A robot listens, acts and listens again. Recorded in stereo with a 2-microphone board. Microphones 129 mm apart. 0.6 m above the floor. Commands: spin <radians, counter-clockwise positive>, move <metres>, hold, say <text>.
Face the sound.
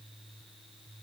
hold
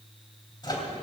spin 0.61
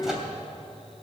say Found it: a microwave, straight ahead.